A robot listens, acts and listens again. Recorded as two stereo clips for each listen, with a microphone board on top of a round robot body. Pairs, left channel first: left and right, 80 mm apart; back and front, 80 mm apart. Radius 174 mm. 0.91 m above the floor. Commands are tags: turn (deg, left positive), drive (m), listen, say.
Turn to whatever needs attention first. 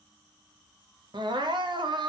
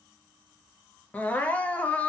<turn deg="-110"/>
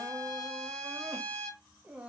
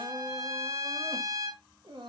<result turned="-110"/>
<turn deg="-20"/>
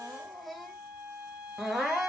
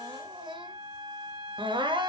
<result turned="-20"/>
<say>Facing the crying.</say>